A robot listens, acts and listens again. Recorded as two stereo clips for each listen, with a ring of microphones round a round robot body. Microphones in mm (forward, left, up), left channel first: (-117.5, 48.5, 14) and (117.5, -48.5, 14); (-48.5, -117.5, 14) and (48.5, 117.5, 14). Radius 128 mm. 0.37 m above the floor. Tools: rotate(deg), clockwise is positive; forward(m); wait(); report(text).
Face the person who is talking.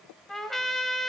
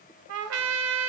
wait()
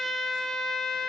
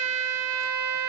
wait()
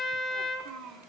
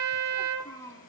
rotate(35)
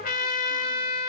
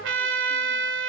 wait()
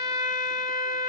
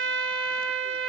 wait()
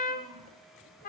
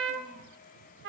report("I heard a child speaking from this way, but can't make it out now.")